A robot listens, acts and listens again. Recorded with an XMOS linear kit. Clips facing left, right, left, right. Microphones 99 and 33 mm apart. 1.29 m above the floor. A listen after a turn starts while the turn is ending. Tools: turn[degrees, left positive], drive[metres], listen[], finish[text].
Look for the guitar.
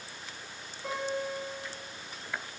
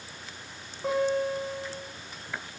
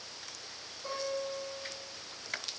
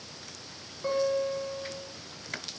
Thought: The guitar: about 40° right or 140° right.
Action: turn[-40]
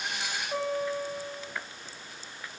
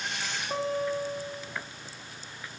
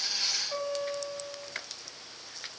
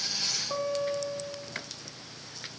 Thought: So it is at 100° right.
Action: turn[-100]
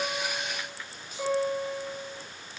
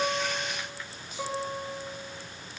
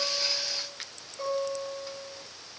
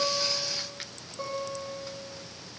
Thought: The guitar is now 20° right.
Action: turn[-20]
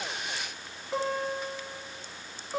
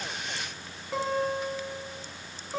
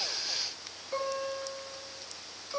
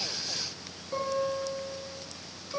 Action: finish[Found it: a guitar, straight ahead.]